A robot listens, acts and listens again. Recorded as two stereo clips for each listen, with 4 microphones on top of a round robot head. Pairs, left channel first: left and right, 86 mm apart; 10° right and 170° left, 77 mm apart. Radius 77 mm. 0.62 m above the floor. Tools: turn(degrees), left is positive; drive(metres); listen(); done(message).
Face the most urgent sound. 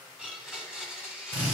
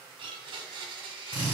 listen()
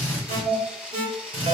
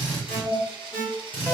turn(degrees=-90)
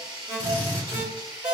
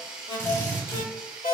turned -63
turn(degrees=-25)
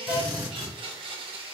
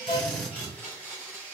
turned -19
done("Facing the alarm.")